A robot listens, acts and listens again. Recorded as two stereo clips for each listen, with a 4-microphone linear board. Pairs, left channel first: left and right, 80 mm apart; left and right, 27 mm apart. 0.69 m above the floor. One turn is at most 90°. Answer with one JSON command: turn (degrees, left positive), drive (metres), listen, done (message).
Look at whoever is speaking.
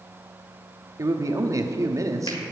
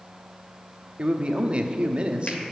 {"turn": -40}
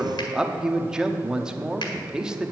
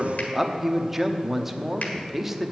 {"turn": -10}
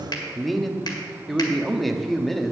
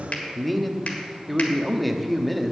{"done": "Facing the man speaking."}